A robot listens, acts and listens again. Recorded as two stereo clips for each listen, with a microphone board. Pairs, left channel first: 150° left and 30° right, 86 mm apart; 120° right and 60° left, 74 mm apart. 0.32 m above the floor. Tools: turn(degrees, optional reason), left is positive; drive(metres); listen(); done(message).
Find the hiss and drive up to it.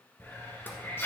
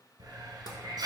turn(degrees=90, reason="The hiss: 90° left.")
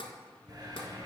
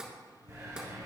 turn(degrees=10, reason="The hiss is now 10° left.")
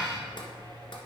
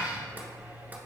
drive(metres=1.0)
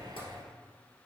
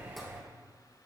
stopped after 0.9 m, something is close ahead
done("I am next to the hiss.")